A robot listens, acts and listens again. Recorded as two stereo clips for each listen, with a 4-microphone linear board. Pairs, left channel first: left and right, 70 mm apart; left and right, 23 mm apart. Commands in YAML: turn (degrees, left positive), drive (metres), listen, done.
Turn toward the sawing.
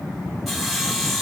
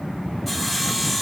turn: 30
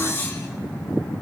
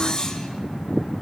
turn: 150
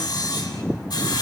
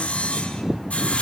turn: 75
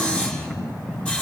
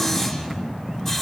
turn: 15
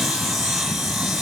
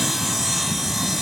done: "Facing the sawing."